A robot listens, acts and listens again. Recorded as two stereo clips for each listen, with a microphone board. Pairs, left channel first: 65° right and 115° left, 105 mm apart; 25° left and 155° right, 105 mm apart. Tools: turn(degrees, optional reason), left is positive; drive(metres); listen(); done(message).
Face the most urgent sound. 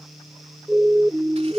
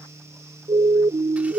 turn(degrees=-160, reason="The siren: 160° right.")
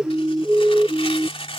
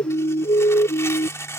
turn(degrees=30, reason="The siren is now 30° left.")
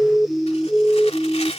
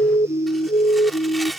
done("Found it: a siren, straight ahead.")